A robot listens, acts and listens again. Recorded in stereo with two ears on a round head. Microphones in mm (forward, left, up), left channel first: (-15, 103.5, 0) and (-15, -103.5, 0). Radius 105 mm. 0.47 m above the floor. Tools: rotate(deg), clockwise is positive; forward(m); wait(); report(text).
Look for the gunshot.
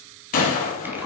rotate(-35)
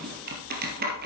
wait()
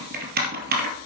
report("I heard a gunshot, but can't make it out now. It was about straight ahead or 110° left.")